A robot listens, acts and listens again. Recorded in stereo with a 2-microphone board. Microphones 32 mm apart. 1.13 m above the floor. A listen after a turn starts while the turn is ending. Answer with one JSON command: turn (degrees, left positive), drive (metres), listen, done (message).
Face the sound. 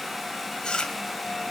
{"turn": 25}
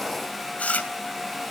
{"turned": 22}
{"turn": 130}
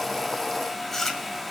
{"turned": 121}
{"turn": 10}
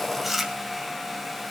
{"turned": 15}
{"done": "Facing the chewing, 2 to 4 m away."}